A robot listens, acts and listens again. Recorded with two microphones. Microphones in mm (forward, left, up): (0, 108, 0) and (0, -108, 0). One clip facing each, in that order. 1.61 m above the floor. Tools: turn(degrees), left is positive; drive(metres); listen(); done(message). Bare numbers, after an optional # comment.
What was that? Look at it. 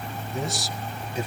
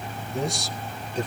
turn(30)
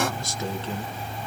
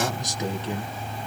# So it is at 15° right.
turn(-15)
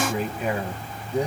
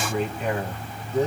# The man speaking is now 15° left.
turn(15)
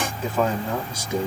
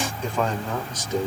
# The man speaking is now 10° left.
turn(10)
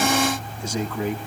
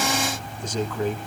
# The man speaking is now 10° left.
turn(10)
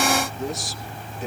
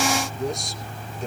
done("Found it: a man speaking, straight ahead.")